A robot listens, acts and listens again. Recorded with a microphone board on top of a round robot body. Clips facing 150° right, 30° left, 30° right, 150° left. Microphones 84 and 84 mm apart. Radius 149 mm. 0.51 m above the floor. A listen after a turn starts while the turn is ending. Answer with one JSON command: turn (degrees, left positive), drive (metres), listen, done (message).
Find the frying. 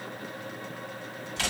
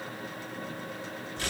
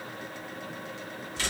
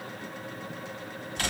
{"listen": true}
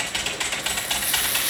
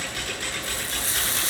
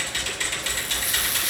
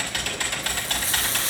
{"turn": 90}
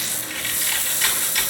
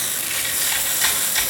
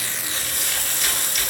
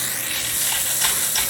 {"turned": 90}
{"done": "Found it: frying, straight ahead, 1 to 2 m away."}